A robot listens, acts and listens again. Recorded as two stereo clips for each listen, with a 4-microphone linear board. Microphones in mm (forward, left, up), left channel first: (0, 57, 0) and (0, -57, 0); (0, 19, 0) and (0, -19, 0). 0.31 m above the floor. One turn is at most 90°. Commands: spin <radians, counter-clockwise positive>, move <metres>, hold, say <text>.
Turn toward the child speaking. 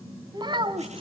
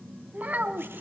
spin -0.79
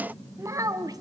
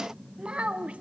spin -0.52
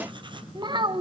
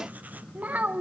spin -0.79
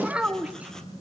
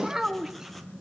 spin -0.17
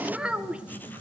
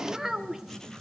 spin -0.17
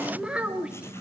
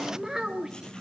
spin -0.17
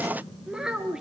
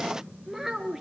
say Facing the child speaking, 2 to 4 m away.